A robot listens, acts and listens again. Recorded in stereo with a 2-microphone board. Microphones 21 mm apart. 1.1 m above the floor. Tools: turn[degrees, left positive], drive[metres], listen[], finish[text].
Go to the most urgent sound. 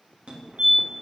Thought: The fire alarm: about 65° right or 115° right.
Action: turn[-65]
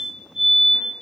Thought: So it is at 30° right.
Action: turn[-30]
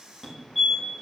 Thought: The fire alarm is now 10° right.
Action: turn[-10]
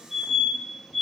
Action: drive[1.0]
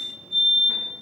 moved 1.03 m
Thought: The fire alarm is now 10° right.
Action: turn[-10]
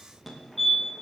Action: drive[1.0]
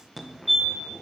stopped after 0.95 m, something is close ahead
Action: finish[I am next to the fire alarm.]